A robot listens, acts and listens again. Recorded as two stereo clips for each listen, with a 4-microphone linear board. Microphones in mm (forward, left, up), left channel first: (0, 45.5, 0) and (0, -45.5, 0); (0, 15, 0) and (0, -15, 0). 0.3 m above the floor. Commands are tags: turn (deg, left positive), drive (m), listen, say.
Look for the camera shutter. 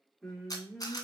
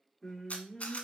<turn deg="45"/>
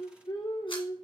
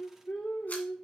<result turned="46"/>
<listen/>
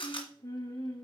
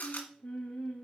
<turn deg="85"/>
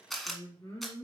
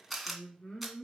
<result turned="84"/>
<say>Found it: a camera shutter, straight ahead, 2 to 4 m away.</say>